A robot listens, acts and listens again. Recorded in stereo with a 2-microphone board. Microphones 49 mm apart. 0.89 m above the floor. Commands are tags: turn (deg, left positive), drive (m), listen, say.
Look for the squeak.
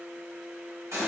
<listen/>
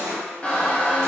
<turn deg="20"/>
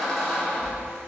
<say>Facing the squeak.</say>